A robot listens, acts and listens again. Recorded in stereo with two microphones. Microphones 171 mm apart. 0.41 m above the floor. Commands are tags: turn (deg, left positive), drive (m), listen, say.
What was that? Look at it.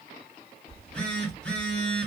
<turn deg="30"/>
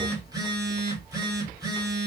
<turn deg="-25"/>
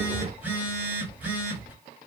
<turn deg="-10"/>
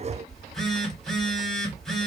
<say>Found it: a phone buzzing, straight ahead, 1 to 2 m away.</say>